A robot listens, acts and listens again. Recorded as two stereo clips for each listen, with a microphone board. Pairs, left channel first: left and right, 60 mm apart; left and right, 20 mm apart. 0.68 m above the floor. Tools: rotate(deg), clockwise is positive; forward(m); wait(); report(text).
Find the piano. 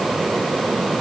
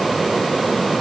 wait()
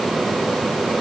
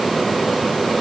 wait()
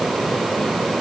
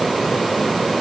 report("I can't make out a piano to turn to.")